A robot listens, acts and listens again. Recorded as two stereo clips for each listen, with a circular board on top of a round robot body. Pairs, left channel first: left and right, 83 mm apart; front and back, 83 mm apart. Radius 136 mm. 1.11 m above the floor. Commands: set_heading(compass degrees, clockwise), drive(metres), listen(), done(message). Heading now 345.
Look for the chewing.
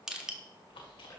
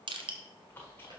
set_heading(280)
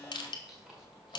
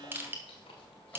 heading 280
done("Facing the chewing, 1 to 2 m away.")